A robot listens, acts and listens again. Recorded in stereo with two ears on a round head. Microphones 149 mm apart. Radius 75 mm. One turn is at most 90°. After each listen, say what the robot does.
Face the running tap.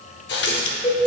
Turn 70° left.
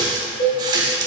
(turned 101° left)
Turn 25° right.
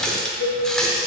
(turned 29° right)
Facing the running tap, 1 to 2 m away.